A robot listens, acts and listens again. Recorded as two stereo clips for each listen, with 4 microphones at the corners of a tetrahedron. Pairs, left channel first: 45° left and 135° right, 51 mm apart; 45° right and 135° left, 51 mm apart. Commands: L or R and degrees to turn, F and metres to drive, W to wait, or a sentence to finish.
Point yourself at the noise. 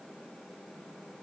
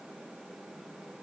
W
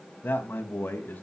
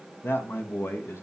R10
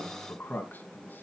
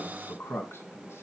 R10
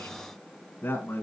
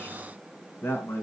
Facing the man speaking.